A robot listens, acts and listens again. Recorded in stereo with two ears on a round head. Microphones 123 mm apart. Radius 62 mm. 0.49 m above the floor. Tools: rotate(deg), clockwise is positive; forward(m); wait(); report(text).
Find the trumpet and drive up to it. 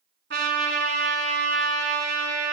rotate(90)
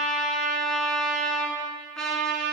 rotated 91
forward(1.0)
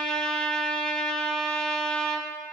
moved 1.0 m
forward(1.0)
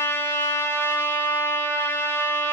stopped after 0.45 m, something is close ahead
rotate(-20)
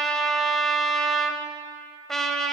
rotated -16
report("Arrived at the trumpet, straight ahead.")